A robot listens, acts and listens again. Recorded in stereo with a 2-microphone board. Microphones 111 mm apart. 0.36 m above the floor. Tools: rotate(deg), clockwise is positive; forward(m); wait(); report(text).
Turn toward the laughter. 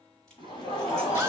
rotate(-50)
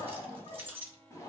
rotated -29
rotate(-40)
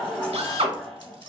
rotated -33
report("Facing the laughter, 1 to 2 m away.")